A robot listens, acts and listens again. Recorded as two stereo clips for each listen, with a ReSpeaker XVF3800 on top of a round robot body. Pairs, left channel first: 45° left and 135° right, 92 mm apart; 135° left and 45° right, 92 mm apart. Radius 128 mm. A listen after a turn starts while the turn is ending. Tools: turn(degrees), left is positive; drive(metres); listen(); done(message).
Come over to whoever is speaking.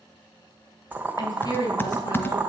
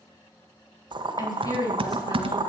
turn(degrees=90)
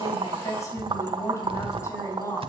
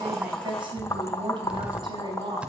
turn(degrees=-10)
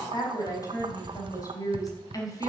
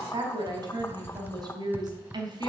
drive(metres=1.0)
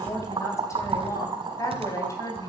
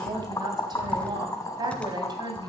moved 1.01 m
turn(degrees=-10)
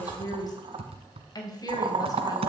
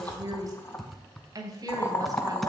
drive(metres=1.0)
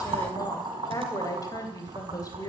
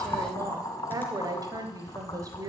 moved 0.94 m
drive(metres=1.0)
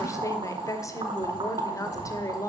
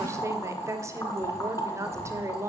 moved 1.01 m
drive(metres=1.0)
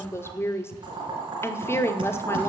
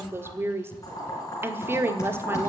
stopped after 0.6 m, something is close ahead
done("I am next to the woman speaking.")